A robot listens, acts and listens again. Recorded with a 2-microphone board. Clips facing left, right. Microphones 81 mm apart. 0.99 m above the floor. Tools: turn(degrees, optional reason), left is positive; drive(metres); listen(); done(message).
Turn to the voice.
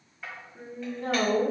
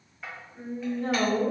turn(degrees=35, reason="The woman speaking: about 35° left or 145° left.")
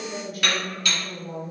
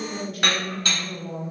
done("Facing the woman speaking.")